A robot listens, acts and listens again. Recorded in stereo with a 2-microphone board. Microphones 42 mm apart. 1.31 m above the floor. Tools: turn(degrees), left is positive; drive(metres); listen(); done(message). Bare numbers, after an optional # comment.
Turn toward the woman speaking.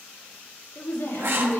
# The woman speaking: about 75° left or 105° left.
turn(75)
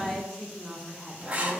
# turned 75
done("Facing the woman speaking, 1 to 2 m away.")